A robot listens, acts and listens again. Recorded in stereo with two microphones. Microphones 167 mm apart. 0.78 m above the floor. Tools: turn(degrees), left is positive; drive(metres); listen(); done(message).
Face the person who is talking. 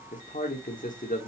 turn(degrees=50)
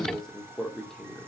done("Facing the man speaking.")